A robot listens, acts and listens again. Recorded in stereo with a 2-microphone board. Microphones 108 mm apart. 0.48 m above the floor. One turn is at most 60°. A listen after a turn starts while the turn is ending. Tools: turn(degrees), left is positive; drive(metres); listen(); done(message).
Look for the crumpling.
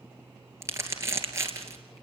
turn(degrees=-25)
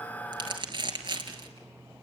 turn(degrees=-60)
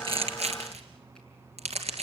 turn(degrees=-60)
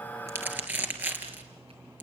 turn(degrees=-15)
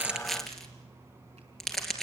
done("Found it: crumpling, straight ahead, 2 to 4 m away.")